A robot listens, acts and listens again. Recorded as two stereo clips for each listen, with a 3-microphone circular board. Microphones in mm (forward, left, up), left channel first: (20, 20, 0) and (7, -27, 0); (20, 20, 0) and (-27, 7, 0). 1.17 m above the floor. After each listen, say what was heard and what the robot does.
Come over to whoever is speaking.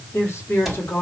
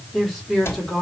The woman speaking: 115° left. Turn 115° left.
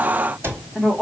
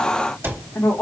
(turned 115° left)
Drive 1.0 m forward.
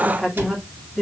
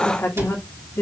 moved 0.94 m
The woman speaking is now 10° right. Turn 10° right.
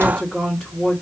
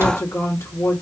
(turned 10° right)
Drive 1.0 m forward.
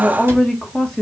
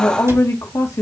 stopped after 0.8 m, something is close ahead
I am next to the woman speaking.